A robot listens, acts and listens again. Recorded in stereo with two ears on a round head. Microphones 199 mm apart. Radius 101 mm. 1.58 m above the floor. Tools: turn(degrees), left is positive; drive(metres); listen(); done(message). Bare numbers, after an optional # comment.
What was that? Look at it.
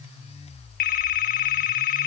# The phone ringing: about 40° left or 140° left.
turn(40)
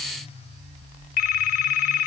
# So it is at 100° left.
turn(100)
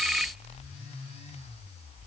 done("Facing the phone ringing.")